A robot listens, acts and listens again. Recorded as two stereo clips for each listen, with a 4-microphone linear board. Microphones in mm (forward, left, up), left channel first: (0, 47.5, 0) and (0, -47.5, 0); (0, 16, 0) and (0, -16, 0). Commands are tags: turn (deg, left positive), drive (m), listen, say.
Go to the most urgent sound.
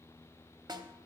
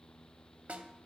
<listen/>
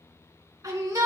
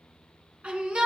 <turn deg="-35"/>
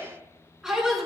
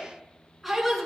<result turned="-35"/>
<drive m="1.0"/>
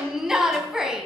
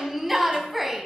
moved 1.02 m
<drive m="1.0"/>
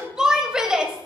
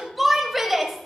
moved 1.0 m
<turn deg="-10"/>
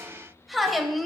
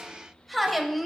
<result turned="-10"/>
<drive m="1.0"/>
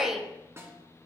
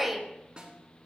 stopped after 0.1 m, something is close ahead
<say>I am next to the shout.</say>